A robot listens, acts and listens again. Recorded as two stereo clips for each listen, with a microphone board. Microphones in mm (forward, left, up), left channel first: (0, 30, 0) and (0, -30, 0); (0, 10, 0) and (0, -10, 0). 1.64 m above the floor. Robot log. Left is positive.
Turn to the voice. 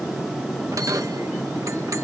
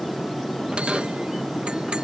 cmd idle
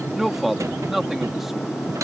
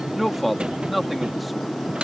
cmd yaw -30
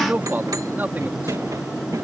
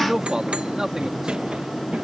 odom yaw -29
note: So it is at 145° right.
cmd yaw -145
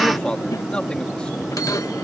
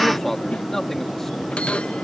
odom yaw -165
note: The man speaking is now 20° left.
cmd yaw +20
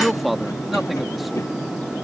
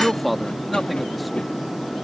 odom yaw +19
end: Facing the man speaking.